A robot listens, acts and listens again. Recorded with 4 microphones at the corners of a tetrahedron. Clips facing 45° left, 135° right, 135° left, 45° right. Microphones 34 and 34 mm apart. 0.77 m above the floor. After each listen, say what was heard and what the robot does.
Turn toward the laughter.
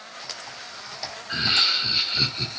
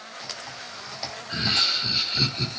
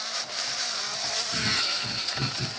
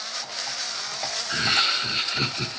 The laughter: 40° right. Turn 40° right.
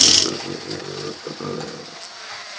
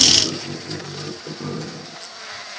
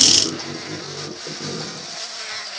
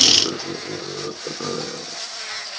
The laughter is now 10° right. Turn 10° right.
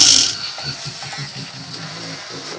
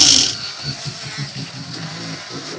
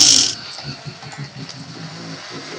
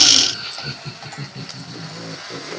The laughter is now 25° right. Turn 25° right.
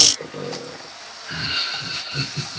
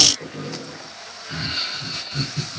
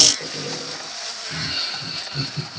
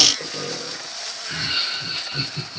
The laughter is now 15° left. Turn 15° left.
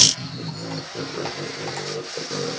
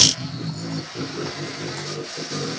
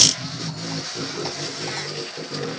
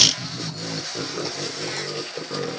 Facing the laughter.